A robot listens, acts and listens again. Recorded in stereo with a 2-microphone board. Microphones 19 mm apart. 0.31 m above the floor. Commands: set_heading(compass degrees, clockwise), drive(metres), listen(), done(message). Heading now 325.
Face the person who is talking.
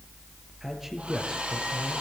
set_heading(345)
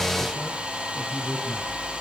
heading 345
set_heading(125)
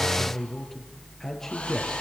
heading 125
set_heading(105)
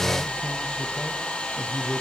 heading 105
done("Facing the man speaking, over 4 m away.")